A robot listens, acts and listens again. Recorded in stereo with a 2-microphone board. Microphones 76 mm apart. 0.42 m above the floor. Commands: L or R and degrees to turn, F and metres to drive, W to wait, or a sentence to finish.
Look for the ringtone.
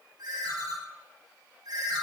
R55
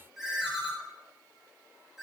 Facing the ringtone, 2 to 4 m away.